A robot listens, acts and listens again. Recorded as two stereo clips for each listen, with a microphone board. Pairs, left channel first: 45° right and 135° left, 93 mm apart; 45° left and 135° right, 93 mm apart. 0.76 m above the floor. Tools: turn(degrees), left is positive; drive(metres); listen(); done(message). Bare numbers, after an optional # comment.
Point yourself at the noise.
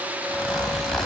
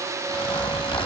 # The zipper: 40° left.
turn(40)
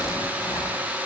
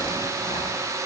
listen()
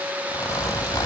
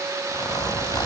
done("Facing the zipper.")